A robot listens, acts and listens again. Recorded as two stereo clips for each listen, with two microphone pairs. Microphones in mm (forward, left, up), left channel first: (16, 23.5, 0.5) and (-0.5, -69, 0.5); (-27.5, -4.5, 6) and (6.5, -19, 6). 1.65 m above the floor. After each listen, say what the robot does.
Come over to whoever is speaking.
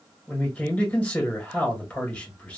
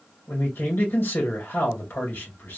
Turn 160° left.
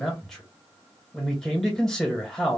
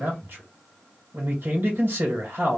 Drive 1.0 m forward.
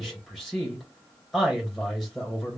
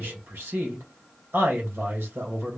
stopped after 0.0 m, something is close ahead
Turn 10° right.
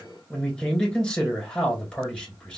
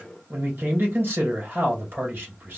Blocked. The man speaking is further on, straight ahead.